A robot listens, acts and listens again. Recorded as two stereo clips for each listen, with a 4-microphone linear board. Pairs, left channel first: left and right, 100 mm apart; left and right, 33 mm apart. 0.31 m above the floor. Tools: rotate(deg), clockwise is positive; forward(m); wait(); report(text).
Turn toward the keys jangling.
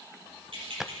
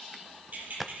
rotate(60)
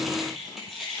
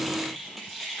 report("Found it: keys jangling, straight ahead, over 4 m away.")